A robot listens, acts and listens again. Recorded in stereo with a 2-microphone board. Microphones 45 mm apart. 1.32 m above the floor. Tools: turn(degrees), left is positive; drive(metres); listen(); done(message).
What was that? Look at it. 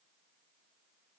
listen()
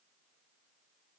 listen()
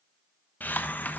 turn(degrees=40)
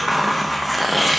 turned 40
done("Found it: a hiss, straight ahead, 1 to 2 m away.")